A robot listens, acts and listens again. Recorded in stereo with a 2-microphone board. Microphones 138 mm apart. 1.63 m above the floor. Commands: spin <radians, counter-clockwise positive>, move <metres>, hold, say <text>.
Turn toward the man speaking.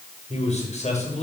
spin 0.96
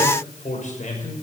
spin 1.05
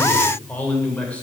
spin 0.17
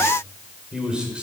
say Facing the man speaking, over 4 m away.